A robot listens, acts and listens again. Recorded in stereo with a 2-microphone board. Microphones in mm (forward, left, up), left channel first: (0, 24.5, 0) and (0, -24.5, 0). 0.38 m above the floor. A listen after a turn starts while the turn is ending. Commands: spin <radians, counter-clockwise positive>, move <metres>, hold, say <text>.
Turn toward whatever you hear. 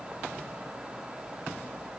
hold
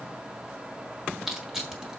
spin -0.52
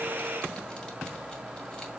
hold
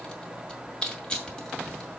spin 0.35
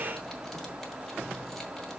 hold
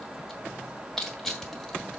spin 0.17
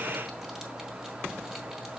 hold
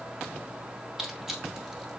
say Found it: crushing, straight ahead.